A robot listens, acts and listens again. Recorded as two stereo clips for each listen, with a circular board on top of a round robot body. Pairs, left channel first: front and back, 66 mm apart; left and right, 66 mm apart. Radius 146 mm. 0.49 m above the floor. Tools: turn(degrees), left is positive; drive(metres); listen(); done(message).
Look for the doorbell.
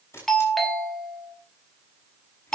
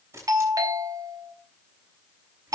turn(degrees=-85)
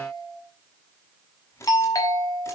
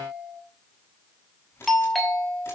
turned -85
done("Found it: a doorbell, straight ahead, 2 to 4 m away.")